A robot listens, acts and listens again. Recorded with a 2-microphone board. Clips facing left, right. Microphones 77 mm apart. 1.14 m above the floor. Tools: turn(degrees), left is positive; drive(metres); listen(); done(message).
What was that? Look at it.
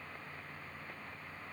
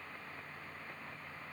listen()
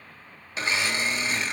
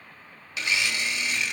turn(degrees=35)
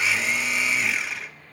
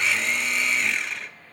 done("Found it: a blender, straight ahead.")